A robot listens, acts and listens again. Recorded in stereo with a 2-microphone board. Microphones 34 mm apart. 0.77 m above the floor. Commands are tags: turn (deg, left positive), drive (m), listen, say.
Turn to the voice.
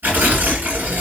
<listen/>
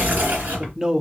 <turn deg="-20"/>
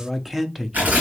<say>Facing the man speaking.</say>